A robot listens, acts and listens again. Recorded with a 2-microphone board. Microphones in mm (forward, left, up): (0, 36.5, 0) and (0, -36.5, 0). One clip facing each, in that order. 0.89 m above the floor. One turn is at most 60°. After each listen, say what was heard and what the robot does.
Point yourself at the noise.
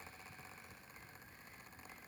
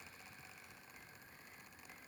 Keep listening.
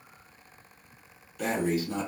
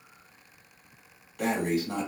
The breathing: about 60° right or 120° right. Turn 60° right.
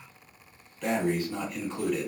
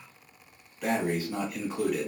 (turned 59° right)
So it is at 10° right. Turn 10° right.
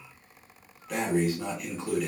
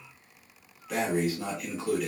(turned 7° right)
Facing the breathing.